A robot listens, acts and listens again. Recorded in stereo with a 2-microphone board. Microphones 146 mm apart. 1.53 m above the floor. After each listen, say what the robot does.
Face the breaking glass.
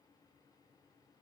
Keep listening.
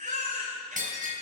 Turn 65° right.
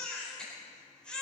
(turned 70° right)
Keep listening.
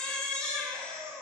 I heard breaking glass, but can't make it out now. It was about 5° left or 45° right.